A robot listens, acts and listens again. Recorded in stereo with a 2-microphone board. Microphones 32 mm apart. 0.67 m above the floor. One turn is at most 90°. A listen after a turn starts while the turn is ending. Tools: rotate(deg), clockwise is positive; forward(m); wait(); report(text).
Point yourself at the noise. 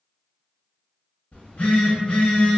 rotate(-45)
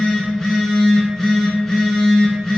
report("Facing the phone buzzing.")